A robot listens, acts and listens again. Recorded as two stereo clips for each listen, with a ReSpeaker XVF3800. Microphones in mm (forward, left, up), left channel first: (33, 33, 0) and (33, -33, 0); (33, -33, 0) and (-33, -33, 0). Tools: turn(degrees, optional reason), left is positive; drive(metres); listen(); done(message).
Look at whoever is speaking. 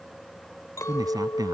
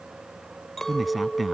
turn(degrees=-90, reason="The man speaking: 90° right.")
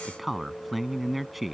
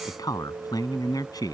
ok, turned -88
done("Facing the man speaking.")